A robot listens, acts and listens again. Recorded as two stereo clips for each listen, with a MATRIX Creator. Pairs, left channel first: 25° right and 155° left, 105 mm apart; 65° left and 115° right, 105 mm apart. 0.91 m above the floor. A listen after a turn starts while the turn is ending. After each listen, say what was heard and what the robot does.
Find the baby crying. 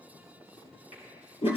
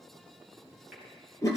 Keep listening.
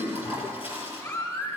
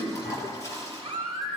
The baby crying: 85° right. Turn 85° right.
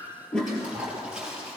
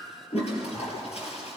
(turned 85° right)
Keep listening.
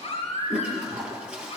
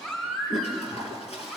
The baby crying is now 15° right. Turn 15° right.
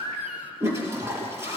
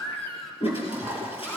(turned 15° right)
Facing the baby crying.